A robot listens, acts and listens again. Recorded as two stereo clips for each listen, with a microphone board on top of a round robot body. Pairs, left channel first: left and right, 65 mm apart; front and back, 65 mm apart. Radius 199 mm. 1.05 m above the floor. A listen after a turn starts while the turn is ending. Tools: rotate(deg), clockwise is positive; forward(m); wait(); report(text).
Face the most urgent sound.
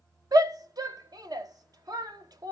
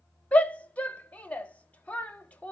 rotate(70)
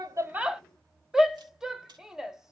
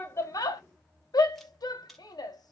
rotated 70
rotate(10)
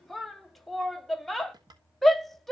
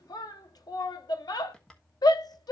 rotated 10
report("Found it: a shout, straight ahead.")